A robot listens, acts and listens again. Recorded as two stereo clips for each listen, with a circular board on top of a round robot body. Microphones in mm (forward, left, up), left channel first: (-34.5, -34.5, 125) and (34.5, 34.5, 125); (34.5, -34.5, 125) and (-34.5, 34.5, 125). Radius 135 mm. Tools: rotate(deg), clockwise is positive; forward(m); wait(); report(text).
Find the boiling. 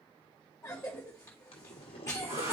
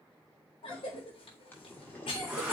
rotate(115)
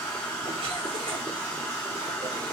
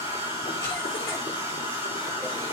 wait()
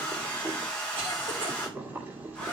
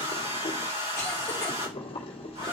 rotate(25)
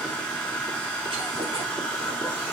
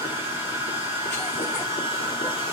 wait()
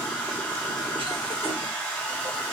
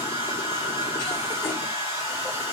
wait()
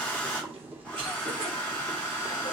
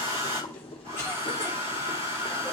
rotate(25)
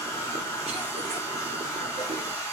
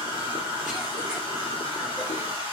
wait()
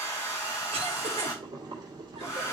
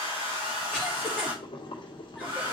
report("Found it: boiling, straight ahead.")